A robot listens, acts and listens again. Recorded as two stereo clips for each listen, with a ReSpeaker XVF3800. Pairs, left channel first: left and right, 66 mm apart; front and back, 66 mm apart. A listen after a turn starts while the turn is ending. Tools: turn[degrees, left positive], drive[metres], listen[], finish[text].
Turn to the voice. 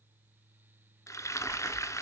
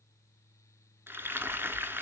Action: listen[]
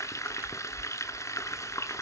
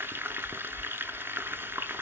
Action: listen[]
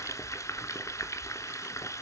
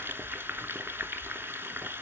Action: finish[I can't make out anyone speaking, only frying.]